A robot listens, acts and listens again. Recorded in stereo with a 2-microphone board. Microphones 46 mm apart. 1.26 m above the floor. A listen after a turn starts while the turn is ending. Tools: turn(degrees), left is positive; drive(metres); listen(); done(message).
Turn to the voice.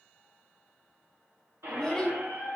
turn(degrees=30)
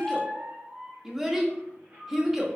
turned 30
turn(degrees=-10)
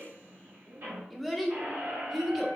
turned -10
done("Facing the child speaking.")